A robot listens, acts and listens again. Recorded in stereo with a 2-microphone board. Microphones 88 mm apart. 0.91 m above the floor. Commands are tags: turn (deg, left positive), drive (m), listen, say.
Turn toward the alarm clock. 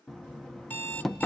<turn deg="20"/>
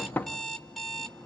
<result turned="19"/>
<say>Facing the alarm clock, 1 to 2 m away.</say>